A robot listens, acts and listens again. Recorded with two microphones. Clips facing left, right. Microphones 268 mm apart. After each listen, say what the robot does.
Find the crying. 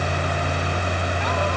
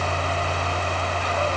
Keep listening.
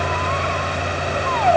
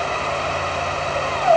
Keep listening.
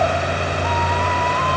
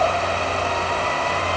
I can't make out crying to turn to.